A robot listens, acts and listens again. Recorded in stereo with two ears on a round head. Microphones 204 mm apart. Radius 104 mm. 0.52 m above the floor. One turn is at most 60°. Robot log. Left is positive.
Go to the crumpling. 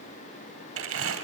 note: The crumpling: about 65° right or 115° right.
cmd yaw -60
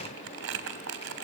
note: So it is at 55° right.
cmd yaw -55
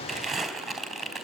cmd fwd 1.0
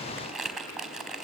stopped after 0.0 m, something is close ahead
end: Blocked. The crumpling is further on, straight ahead.